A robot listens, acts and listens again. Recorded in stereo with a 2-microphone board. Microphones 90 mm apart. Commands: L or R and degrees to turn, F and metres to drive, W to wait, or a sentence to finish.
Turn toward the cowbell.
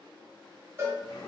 R25
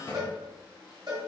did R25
R125
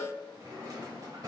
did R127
Found it: a cowbell, straight ahead, 1 to 2 m away.